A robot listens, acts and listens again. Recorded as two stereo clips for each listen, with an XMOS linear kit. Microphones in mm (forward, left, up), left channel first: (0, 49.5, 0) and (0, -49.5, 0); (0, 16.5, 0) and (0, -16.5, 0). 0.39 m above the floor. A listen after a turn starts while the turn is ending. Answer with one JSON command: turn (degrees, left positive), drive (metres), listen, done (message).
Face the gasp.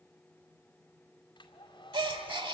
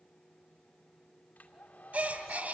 {"turn": -55}
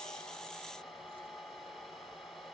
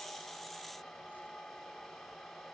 {"listen": true}
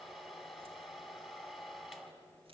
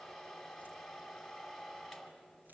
{"done": "I heard a gasp, but can't make it out now. It was about straight ahead or 70° right."}